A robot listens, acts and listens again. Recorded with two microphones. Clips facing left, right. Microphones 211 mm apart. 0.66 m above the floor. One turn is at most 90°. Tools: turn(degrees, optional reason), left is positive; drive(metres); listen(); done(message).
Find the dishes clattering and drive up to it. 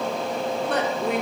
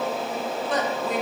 listen()
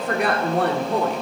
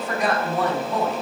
listen()
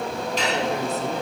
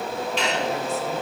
turn(degrees=40, reason="The dishes clattering: about 40° left or 140° left.")
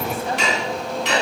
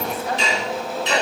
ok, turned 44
turn(degrees=90, reason="So it is at 95° left.")
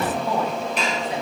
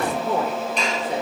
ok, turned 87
drive(metres=1.0)
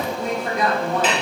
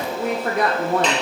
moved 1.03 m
drive(metres=1.0)
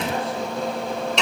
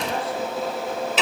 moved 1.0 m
drive(metres=1.0)
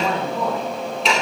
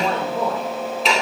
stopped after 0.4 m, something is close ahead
done("I am next to the dishes clattering.")